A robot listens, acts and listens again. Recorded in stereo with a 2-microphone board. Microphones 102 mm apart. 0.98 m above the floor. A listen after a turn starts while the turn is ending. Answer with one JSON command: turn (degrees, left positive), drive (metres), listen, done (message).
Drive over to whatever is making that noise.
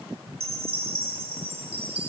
{"turn": -70}
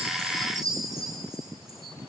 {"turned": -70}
{"turn": -35}
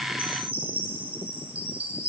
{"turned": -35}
{"turn": -15}
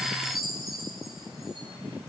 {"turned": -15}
{"drive": 1.0}
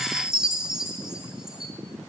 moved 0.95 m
{"drive": 1.0}
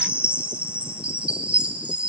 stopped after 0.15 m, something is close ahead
{"turn": -10}
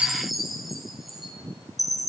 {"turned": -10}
{"done": "I am next to the chime."}